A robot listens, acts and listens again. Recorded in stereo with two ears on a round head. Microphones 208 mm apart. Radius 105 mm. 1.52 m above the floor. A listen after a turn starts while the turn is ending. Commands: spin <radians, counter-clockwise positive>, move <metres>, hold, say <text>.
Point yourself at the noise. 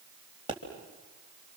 spin -0.35
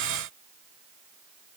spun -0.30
hold
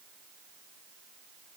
say I heard a pop, but can't make it out now. It was about 5° right or 140° right.